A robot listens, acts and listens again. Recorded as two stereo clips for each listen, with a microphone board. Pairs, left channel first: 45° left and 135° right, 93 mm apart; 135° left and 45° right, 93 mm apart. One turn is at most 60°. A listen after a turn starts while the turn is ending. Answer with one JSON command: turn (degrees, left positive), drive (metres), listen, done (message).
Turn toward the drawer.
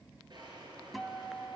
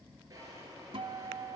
{"turn": -60}
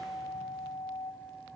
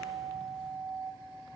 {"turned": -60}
{"turn": -35}
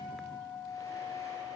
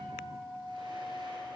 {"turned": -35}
{"listen": true}
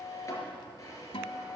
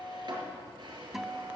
{"turn": -10}
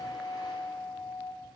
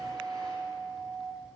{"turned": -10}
{"listen": true}
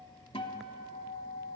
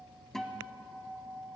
{"listen": true}
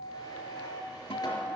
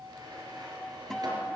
{"done": "Facing where the drawer came from. I can't hear it now."}